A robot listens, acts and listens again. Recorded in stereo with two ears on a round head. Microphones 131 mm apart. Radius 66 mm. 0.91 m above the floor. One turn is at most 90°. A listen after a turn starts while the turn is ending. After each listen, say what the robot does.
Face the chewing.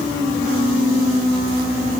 Keep listening.
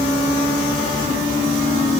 Keep listening.
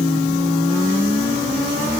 I can't make out chewing to turn to.